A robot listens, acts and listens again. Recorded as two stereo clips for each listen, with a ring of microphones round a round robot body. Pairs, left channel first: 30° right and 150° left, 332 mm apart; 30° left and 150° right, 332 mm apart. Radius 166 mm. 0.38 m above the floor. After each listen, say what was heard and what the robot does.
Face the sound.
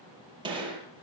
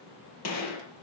The gunshot: 75° left. Turn 75° left.
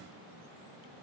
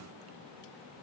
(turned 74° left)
I heard a gunshot from this way, but can't make it out now.